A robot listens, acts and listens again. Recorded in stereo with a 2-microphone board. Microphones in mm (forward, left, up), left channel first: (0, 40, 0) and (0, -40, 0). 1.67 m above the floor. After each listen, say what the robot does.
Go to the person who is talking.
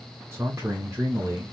Turn 30° right.
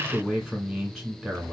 Drive 1.0 m forward.
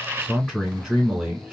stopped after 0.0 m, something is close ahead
Something is in my way. I am facing the man speaking but have not reached it.